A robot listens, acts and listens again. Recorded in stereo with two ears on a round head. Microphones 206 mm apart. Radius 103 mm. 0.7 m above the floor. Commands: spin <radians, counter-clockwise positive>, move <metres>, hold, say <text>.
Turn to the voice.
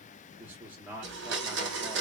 spin -0.52
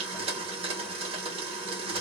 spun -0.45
hold
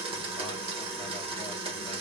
hold
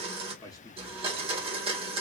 spin 0.35
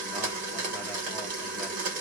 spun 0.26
hold
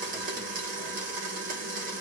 hold
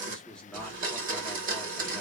say Facing the man speaking.